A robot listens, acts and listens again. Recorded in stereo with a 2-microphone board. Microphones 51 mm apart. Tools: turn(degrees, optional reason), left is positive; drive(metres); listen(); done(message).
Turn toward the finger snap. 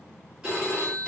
listen()
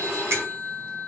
turn(degrees=-60, reason="The finger snap: about 60° right or 120° right.")
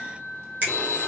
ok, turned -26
turn(degrees=-35, reason="So it is at 35° right.")
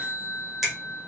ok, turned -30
done("Facing the finger snap, 1 to 2 m away.")